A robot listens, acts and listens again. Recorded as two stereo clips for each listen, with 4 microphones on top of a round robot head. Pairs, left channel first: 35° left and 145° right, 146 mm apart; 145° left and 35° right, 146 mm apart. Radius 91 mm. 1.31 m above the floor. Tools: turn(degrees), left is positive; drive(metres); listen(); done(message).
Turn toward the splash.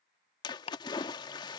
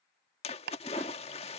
turn(degrees=95)
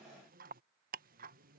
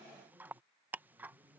done("Facing where the splash came from. I can't hear it now.")